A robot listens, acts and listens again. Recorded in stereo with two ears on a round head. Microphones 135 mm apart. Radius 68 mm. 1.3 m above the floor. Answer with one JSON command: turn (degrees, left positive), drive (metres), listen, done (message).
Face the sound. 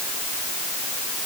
{"listen": true}
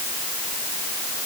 {"listen": true}
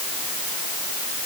{"done": "I can't make out anything to turn to."}